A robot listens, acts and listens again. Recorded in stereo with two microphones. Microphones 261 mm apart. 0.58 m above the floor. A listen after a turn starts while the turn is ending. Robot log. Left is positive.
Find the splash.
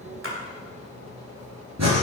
note: The splash: about 50° right or 130° right.
cmd yaw -50
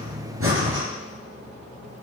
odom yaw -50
cmd idle
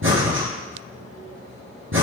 end: I heard a splash, but can't make it out now. It was about straight ahead or 80° right.